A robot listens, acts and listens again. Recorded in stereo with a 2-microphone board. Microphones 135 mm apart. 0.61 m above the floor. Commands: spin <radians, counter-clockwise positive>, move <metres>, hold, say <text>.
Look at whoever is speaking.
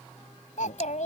spin 1.57
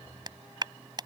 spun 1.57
hold
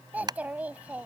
spin -0.17
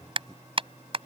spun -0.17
hold
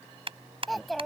say Facing the child speaking.